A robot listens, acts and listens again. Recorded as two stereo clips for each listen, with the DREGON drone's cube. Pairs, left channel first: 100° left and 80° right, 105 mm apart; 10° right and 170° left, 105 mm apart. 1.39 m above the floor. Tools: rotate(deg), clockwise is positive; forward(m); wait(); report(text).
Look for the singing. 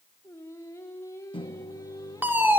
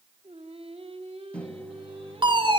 rotate(-160)
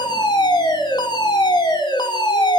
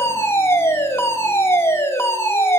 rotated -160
wait()
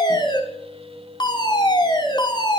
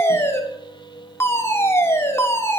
rotate(50)
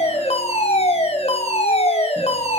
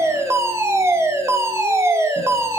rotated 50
wait()
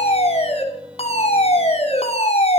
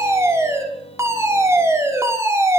wait()
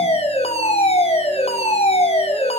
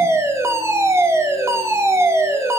report("I heard singing from this way, but can't make it out now.")